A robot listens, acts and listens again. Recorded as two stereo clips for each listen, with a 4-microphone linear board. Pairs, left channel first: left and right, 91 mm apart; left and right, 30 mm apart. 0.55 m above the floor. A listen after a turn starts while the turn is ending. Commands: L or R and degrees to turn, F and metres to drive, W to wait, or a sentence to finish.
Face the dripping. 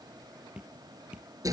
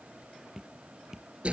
R30
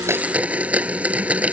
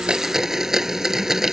W
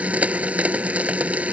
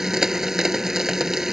W
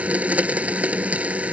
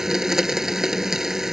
I heard dripping, but can't make it out now. It was about 20° left or 140° right.